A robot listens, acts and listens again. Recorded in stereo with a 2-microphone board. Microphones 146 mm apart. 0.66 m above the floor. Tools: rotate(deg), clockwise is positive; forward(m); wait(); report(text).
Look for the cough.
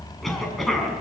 rotate(-30)
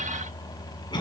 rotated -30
rotate(-150)
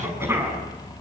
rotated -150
rotate(15)
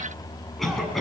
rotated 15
report("Found it: a cough, straight ahead.")